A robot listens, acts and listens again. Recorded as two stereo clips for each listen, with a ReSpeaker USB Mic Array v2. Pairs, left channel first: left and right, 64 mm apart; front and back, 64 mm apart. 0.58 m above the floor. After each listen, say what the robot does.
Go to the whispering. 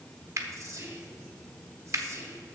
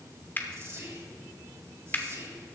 Turn 130° right.
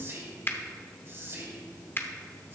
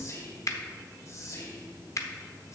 Turn 40° right.
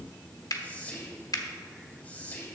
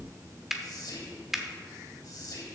Turn 20° left.
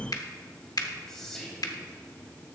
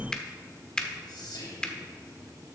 Drive 1.0 m forward.
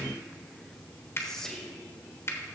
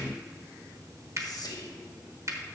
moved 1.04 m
Drive 1.0 m forward.
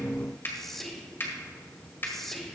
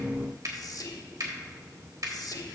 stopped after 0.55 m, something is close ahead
I am next to the whispering.